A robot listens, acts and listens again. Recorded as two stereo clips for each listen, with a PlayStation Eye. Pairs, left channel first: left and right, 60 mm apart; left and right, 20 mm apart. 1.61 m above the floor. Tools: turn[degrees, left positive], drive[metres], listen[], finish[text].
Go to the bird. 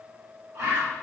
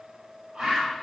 Thought: The bird: about 45° right or 135° right.
Action: turn[-45]
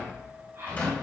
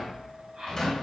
Thought: So it is at 80° right.
Action: turn[-80]
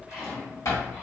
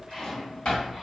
Action: listen[]
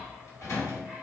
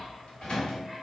Action: listen[]
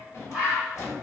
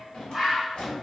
Thought: The bird is now 10° right.
Action: turn[-10]
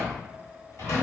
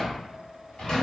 Action: listen[]
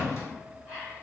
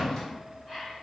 Action: drive[1.0]
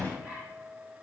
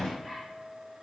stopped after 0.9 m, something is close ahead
Action: listen[]
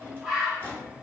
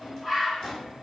Action: finish[Arrived at the bird, straight ahead.]